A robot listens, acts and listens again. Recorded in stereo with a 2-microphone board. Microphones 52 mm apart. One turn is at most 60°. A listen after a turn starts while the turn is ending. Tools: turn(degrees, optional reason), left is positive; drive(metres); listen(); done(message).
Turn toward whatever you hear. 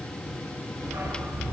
turn(degrees=-60)
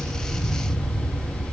turn(degrees=-40, reason="So it is at 40° right.")
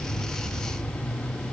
done("Found it: a dog barking, straight ahead, over 4 m away.")